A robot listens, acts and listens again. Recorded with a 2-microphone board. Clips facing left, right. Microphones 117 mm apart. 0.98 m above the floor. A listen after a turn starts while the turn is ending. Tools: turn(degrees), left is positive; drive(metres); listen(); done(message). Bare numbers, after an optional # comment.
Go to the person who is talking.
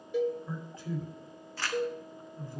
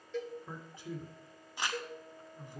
# The man speaking: about 20° right or 160° right.
turn(-20)
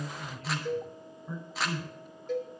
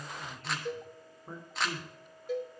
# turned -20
# So it is at 140° right.
turn(-140)
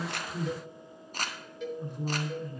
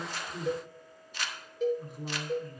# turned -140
drive(1.0)
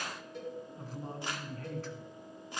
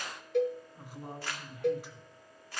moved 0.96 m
drive(1.0)
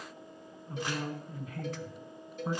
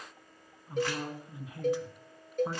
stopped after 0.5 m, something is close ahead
# The man speaking is now 10° right.
turn(-10)
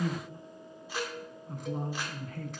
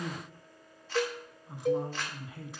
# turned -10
done("Arrived at the man speaking, straight ahead.")